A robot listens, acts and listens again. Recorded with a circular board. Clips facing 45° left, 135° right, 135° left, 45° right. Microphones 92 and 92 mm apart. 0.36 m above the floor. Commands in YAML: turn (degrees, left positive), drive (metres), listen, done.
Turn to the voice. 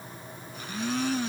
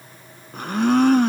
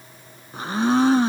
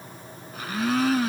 listen: true
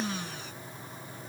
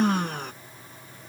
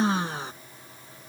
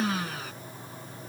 listen: true
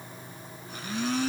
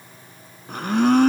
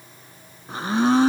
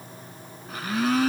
done: "I can't make out anyone speaking to turn to."